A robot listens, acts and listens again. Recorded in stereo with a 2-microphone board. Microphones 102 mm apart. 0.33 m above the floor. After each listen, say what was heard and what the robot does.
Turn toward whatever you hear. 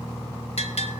Turn 90° left.
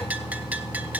So it is at 15° right. Turn 15° right.
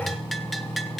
Facing the bell.